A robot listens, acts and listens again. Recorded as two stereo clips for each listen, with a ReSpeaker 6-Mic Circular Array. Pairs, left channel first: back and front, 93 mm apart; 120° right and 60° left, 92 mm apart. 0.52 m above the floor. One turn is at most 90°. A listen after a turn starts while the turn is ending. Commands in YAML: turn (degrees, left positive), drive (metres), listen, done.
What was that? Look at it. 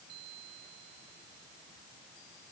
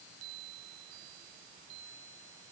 listen: true
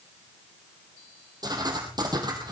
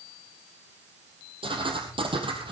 turn: 45
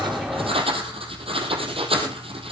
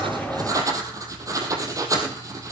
turn: 10
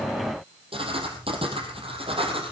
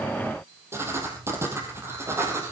done: "Facing the writing."